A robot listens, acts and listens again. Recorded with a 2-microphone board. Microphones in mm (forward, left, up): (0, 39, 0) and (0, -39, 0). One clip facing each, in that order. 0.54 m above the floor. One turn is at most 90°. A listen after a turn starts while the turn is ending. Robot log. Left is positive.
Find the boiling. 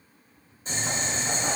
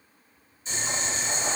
note: The boiling: about 45° left or 135° left.
cmd yaw +45
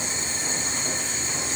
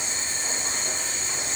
end: Facing the boiling, 1 to 2 m away.